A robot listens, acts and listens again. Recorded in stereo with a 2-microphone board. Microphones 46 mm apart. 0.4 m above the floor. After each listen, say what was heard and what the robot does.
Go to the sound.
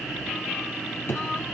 The drawer: about 60° left or 120° left. Turn 60° left.
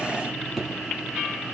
Drive 1.0 m forward.
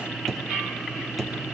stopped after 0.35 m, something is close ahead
Something is in my way. I am facing the drawer but have not reached it.